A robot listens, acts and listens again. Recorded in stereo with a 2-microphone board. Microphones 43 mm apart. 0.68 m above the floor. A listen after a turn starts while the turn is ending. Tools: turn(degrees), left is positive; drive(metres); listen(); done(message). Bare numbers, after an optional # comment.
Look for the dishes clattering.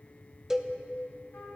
listen()
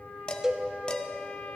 # The dishes clattering: about 25° left or 155° left.
turn(25)
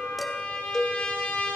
listen()
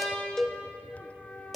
done("Facing the dishes clattering.")